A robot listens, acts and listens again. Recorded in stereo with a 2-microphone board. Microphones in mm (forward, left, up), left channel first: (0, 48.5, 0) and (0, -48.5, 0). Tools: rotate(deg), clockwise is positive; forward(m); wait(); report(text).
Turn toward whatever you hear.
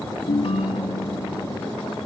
rotate(-65)
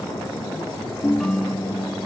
report("Found it: a ringtone, straight ahead, 1 to 2 m away.")